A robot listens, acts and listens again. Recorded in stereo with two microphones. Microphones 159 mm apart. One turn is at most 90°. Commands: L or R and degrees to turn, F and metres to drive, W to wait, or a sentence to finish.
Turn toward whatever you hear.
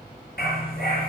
L90
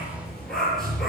Found it: a dog barking, straight ahead, over 4 m away.